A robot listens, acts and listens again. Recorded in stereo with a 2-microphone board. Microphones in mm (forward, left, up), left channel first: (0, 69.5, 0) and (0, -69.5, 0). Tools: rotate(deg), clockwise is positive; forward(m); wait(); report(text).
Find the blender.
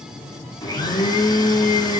rotate(-30)
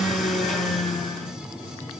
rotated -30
report("Facing the blender, 2 to 4 m away.")